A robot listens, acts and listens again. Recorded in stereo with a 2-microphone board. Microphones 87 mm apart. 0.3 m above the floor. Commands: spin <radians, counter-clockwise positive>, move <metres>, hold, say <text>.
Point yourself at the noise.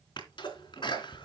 spin 1.13
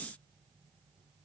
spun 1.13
hold
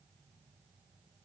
say I heard a sneeze, but can't make it out now. It was about straight ahead or 50° left.